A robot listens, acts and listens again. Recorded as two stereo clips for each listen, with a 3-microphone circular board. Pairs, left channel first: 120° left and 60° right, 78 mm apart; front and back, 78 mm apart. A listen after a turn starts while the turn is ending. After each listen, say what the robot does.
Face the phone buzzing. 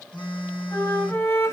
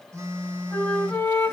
Turn 125° left.
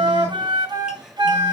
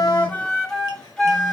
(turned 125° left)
Keep listening.
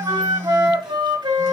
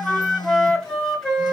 Turn 20° right.
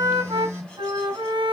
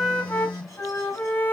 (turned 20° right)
Facing the phone buzzing, over 4 m away.